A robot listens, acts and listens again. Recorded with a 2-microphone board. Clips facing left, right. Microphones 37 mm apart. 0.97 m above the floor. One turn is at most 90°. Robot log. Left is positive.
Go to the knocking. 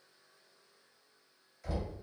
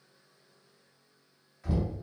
note: The knocking: about 25° right or 155° right.
cmd yaw -25
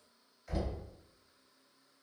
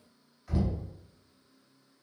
cmd fwd 1.0
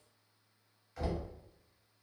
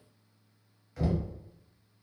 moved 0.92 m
cmd fwd 1.0
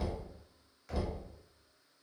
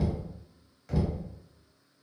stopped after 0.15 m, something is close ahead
end: Arrived at the knocking, straight ahead.